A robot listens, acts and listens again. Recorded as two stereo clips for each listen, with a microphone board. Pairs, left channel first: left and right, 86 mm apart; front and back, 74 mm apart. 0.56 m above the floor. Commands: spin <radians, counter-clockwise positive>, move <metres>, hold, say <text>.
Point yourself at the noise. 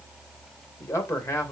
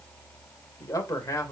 spin 0.61
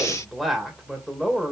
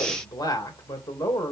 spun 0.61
say Found it: a man speaking, straight ahead, 2 to 4 m away.